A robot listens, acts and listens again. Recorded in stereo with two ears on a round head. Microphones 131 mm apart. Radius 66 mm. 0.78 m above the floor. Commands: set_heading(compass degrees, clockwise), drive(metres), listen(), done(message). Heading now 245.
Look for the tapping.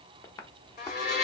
set_heading(225)
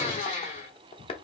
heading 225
set_heading(85)
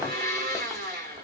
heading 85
listen()
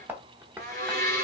set_heading(100)
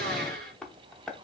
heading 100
done("Facing the tapping.")